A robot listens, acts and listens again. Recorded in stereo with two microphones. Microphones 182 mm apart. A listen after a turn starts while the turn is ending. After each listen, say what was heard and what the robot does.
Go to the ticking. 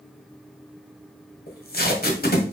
Keep listening.
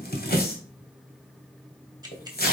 The ticking: about 20° right or 160° right. Turn 20° right.
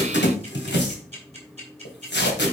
So it is at 135° right. Turn 135° right.
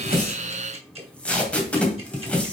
Keep listening.
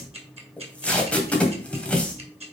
The ticking is now 40° right. Turn 40° right.
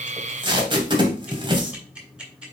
Drive 1.0 m forward.
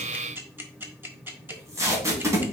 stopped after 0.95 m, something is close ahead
The ticking is now 15° right. Turn 15° right.
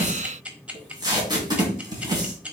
The ticking is now 10° right. Turn 10° right.
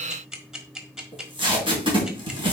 I am next to the ticking.